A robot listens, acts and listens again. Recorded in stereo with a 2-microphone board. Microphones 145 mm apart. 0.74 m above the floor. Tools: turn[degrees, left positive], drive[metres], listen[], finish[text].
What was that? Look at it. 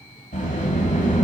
Thought: The sliding door: about 55° left or 125° left.
Action: turn[55]
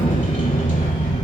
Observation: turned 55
Thought: So it is at 65° left.
Action: turn[65]
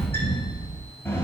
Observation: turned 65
Thought: The sliding door is now 20° left.
Action: turn[20]
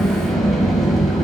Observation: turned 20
Action: finish[Facing the sliding door, 1 to 2 m away.]